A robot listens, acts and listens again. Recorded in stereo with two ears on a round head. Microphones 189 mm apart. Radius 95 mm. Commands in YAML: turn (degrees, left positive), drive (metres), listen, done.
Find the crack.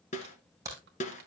turn: -15
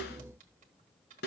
listen: true
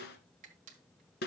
done: "I heard a crack, but can't make it out now. It was about straight ahead or 150° right."